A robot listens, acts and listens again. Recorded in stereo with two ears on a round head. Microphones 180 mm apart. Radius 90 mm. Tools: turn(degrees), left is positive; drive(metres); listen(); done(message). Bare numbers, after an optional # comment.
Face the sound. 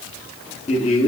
# The man speaking: about 35° left or 145° left.
turn(35)
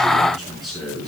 done("Found it: a man speaking, straight ahead.")